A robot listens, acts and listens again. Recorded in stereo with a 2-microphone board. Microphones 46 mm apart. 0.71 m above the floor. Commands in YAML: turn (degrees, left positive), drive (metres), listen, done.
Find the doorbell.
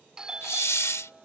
turn: -15
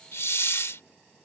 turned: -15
listen: true
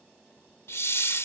listen: true
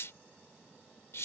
done: "I heard a doorbell, but can't make it out now. It was about straight ahead or 150° right."